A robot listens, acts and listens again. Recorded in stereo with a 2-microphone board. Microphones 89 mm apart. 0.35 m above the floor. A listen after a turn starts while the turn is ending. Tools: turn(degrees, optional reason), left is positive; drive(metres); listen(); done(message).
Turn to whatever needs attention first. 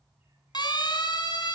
turn(degrees=55, reason="The siren: about 55° left or 125° left.")
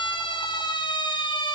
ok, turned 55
turn(degrees=65, reason="So it is at 65° left.")
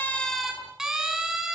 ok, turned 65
done("Found it: a siren, straight ahead.")